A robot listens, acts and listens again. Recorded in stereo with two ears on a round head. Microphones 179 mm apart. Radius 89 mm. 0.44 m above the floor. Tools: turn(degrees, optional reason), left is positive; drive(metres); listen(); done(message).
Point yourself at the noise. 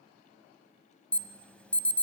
turn(degrees=30)
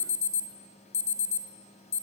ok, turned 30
turn(degrees=140, reason="So it is at 140° left.")
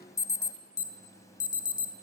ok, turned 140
turn(degrees=15, reason="The alarm is now 15° left.")
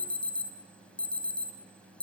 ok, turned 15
done("Facing the alarm, 2 to 4 m away.")